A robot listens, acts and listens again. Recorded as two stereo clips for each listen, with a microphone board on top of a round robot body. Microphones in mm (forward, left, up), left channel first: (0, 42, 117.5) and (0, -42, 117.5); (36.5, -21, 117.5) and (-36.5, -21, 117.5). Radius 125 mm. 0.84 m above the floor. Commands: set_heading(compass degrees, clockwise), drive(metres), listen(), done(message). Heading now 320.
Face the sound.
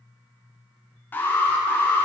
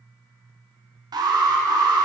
set_heading(160)
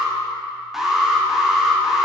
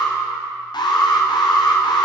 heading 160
done("Found it: an alarm, straight ahead.")